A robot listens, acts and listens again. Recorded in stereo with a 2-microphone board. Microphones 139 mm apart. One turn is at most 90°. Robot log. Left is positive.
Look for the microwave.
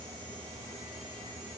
cmd idle
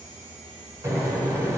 note: The microwave: about 20° right or 160° right.
cmd yaw -20
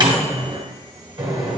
note: So it is at 140° right.
cmd yaw -90
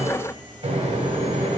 note: The microwave is now 65° right.
cmd yaw -65
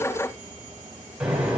note: The microwave is now 10° right.
cmd yaw -10
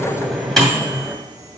end: Found it: a microwave, straight ahead, 1 to 2 m away.